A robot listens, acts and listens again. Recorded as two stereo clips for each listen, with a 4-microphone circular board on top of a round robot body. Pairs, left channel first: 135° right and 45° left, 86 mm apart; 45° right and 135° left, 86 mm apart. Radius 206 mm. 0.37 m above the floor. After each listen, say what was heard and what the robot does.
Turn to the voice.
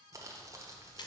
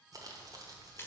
Keep listening.
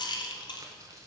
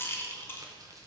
Keep listening.
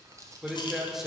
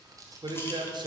The man speaking: 130° left. Turn 130° left.
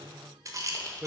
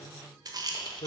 The man speaking is now 30° right. Turn 30° right.
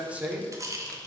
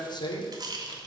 The man speaking is now 30° right. Turn 30° right.
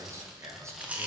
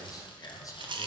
Found it: a man speaking, straight ahead.